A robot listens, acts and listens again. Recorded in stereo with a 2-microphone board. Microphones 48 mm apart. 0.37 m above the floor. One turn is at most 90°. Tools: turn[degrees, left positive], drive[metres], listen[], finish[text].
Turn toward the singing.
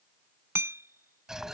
Action: listen[]
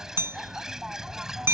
Action: listen[]
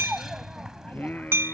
Thought: The singing: about 40° left or 140° left.
Action: turn[40]
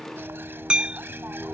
Action: finish[Facing the singing.]